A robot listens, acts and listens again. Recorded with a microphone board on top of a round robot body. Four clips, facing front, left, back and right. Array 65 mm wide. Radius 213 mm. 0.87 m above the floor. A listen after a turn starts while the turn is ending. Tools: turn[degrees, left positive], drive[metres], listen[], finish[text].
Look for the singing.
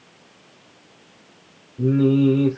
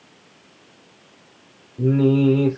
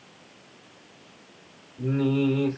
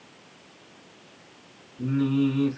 Thought: The singing: 65° left.
Action: turn[65]
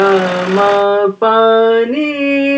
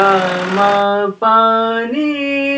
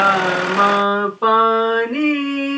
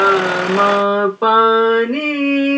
Action: finish[Found it: singing, straight ahead.]